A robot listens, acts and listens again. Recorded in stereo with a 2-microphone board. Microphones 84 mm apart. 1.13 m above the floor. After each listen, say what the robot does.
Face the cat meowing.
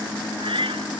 Turn 90° right.
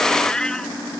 Turn 10° left.
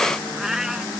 Found it: a cat meowing, straight ahead.